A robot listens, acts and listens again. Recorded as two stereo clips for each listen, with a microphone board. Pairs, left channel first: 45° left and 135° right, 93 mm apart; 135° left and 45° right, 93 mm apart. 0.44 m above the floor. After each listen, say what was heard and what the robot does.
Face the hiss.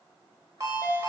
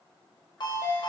Keep listening.
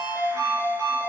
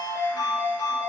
Keep listening.
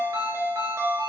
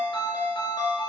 I can't make out a hiss to turn to.